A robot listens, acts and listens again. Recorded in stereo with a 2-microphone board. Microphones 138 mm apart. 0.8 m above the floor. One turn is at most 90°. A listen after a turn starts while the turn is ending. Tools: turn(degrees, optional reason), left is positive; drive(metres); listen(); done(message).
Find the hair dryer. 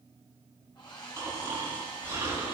turn(degrees=35, reason="The hair dryer: about 35° left or 145° left.")
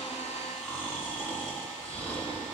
listen()
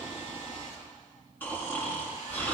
listen()
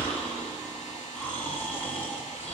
done("I heard a hair dryer, but can't make it out now. It was about straight ahead or 110° left.")